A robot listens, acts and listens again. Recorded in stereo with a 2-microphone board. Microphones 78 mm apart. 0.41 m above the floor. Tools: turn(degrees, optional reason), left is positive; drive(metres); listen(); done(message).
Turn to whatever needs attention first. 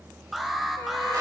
turn(degrees=-30)
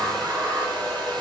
listen()
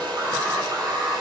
turn(degrees=-140, reason="So it is at 140° right.")
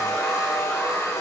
listen()
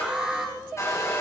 turn(degrees=-10, reason="The alarm is now 10° right.")
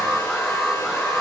done("Found it: an alarm, straight ahead.")